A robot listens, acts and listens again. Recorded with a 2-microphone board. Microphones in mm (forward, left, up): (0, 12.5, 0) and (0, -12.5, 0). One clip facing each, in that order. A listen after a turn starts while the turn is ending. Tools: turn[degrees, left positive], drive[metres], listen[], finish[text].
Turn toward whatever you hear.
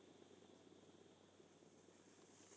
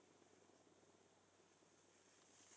Action: listen[]
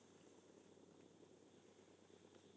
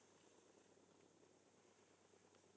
Action: listen[]
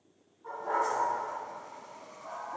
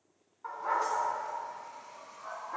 Action: turn[-90]
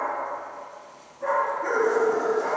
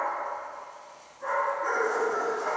Action: finish[Found it: a dog barking, straight ahead, 2 to 4 m away.]